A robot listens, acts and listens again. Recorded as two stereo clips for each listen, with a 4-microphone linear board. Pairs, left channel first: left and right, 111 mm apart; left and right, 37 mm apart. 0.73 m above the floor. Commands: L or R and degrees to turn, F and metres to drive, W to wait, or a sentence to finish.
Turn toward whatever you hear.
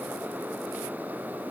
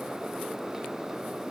W
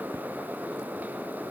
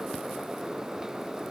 W
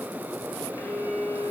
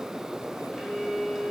L20
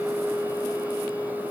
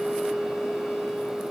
L140
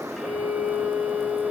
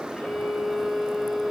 Facing the violin.